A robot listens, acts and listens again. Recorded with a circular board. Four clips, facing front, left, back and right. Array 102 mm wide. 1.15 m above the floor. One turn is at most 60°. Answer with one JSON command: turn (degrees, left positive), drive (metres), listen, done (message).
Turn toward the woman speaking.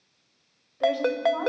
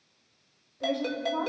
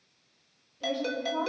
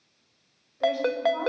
{"done": "Found it: a woman speaking, straight ahead, over 4 m away."}